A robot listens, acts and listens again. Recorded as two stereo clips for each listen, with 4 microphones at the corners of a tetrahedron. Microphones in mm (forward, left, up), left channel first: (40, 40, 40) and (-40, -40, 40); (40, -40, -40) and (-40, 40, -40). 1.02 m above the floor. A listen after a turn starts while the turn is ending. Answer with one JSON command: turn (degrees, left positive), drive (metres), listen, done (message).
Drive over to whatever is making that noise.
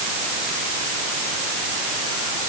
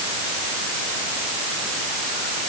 {"listen": true}
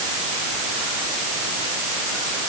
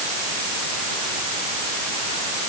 {"listen": true}
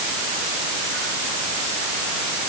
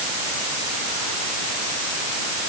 {"done": "I can't make out anything to turn to."}